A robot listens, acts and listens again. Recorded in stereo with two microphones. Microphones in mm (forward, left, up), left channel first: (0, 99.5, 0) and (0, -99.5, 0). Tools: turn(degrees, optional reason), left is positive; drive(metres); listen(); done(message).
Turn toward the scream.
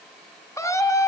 turn(degrees=30)
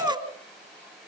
turn(degrees=-15, reason="So it is at 15° right.")
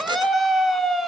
done("Facing the scream, 2 to 4 m away.")